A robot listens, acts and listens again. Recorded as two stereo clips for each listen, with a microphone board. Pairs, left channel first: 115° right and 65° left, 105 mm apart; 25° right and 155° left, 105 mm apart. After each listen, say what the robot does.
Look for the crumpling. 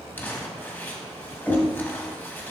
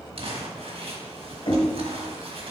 Turn 175° left.
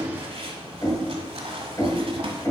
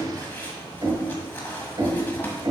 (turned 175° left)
Turn 50° left.
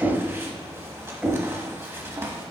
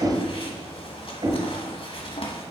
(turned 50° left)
Found it: crumpling, straight ahead, 1 to 2 m away.